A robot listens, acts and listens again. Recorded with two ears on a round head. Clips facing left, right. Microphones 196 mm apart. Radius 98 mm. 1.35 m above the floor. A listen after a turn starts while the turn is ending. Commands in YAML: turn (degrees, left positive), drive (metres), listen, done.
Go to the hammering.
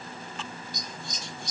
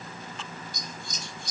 listen: true
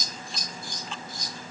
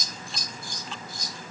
listen: true
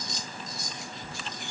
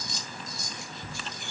done: "I can't make out hammering to turn to."